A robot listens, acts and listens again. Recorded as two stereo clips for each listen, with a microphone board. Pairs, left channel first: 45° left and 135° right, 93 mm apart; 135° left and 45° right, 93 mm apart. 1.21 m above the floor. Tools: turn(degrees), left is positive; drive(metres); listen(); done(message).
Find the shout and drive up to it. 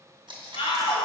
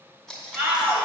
turn(degrees=20)
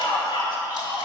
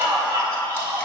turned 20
drive(metres=1.0)
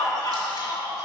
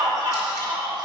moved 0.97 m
drive(metres=1.0)
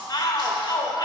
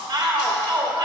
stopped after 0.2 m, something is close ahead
done("I am next to the shout.")